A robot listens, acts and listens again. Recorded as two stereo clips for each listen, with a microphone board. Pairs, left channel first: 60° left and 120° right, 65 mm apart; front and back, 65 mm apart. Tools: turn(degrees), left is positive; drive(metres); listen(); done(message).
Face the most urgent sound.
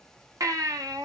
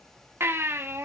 turn(degrees=-135)
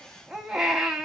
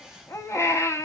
turn(degrees=-40)
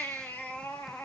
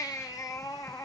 done("Facing the baby crying, 1 to 2 m away.")